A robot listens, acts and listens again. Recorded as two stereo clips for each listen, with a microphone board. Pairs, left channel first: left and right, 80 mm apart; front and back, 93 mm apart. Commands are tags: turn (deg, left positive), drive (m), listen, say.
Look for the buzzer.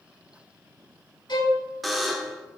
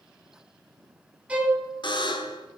<say>Found it: a buzzer, straight ahead, under 1 m away.</say>